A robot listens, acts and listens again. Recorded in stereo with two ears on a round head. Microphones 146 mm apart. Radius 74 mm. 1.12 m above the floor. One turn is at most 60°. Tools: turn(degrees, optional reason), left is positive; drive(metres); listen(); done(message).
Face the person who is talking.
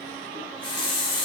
listen()
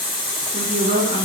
turn(degrees=-50, reason="The woman speaking: about 50° right or 130° right.")
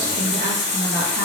listen()
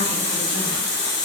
listen()
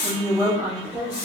turn(degrees=-15, reason="So it is at 15° right.")
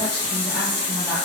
listen()
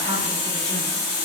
listen()
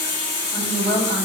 done("Facing the woman speaking.")